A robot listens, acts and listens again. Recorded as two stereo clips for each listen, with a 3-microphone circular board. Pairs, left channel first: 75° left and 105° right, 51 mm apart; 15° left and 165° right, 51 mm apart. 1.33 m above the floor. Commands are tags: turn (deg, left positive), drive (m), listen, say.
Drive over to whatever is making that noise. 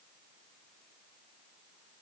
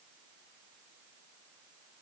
<listen/>
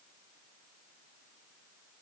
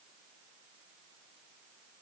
<listen/>
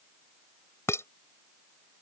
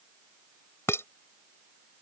<turn deg="45"/>
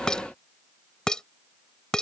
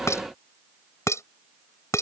<drive m="1.0"/>
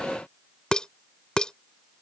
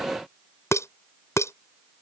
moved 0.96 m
<drive m="1.0"/>
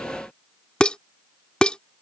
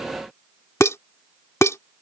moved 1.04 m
<drive m="1.0"/>
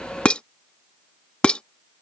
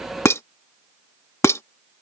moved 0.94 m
<turn deg="10"/>
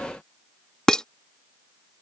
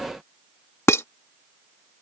<drive m="1.0"/>
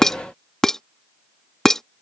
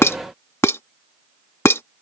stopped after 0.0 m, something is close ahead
<say>Arrived at the dishes clattering, straight ahead.</say>